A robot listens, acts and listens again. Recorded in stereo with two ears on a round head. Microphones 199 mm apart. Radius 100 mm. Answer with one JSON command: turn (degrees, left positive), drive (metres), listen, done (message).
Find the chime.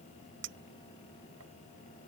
{"listen": true}
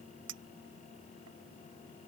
{"listen": true}
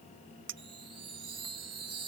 {"turn": -25}
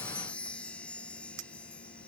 {"done": "Facing the chime."}